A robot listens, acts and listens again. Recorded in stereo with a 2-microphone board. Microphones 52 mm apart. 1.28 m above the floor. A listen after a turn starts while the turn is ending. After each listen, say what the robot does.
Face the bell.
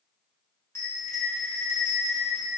Turn 60° left.
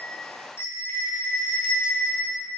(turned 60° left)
Turn 55° left.
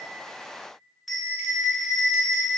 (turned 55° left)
Found it: a bell, straight ahead.